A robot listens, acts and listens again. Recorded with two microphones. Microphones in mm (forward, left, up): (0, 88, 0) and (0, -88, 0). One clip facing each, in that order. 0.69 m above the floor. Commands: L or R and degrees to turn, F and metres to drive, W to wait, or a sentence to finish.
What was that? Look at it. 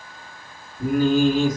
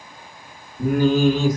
R65
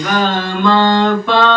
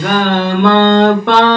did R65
R80
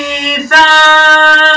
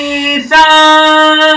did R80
R35
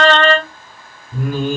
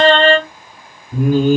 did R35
R25
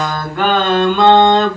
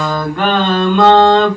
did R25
Facing the singing.